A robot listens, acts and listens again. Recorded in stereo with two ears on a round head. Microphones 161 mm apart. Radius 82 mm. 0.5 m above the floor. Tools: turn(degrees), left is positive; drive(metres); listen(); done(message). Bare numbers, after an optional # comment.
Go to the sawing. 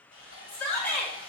# The sawing: about 45° left or 135° left.
turn(45)
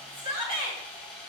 drive(1.0)
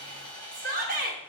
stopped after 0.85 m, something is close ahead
# The sawing is now 10° left.
turn(10)
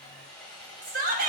done("I am next to the sawing.")